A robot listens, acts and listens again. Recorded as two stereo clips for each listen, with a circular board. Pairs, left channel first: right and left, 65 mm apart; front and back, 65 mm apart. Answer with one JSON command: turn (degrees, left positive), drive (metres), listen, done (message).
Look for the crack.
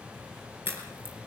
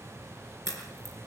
{"turn": 145}
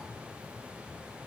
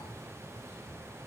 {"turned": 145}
{"done": "Facing where the crack came from. I can't hear it now."}